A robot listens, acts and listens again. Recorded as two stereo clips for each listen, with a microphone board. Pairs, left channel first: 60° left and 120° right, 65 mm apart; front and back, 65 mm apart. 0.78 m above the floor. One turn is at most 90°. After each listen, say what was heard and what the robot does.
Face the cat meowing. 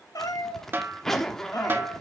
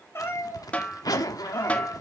The cat meowing: 45° left. Turn 45° left.
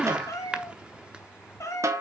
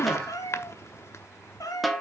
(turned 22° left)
The cat meowing is now 25° left. Turn 25° left.
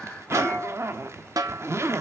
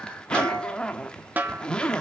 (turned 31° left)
Keep listening.
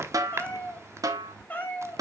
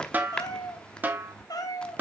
Facing the cat meowing.